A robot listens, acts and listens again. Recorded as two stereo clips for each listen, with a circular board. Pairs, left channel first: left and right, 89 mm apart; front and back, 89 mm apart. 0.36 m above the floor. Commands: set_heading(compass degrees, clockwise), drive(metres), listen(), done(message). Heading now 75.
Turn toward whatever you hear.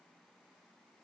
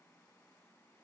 listen()
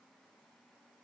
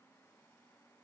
listen()
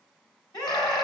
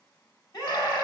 set_heading(25)
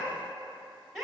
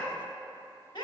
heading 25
done("Facing the scream.")